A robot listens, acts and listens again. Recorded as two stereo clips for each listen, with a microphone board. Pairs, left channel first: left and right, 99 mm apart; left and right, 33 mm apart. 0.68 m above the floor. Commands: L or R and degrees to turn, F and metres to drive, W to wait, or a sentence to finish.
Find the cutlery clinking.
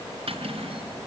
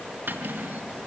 R90
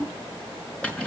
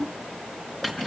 L10
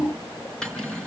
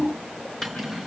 Found it: cutlery clinking, straight ahead.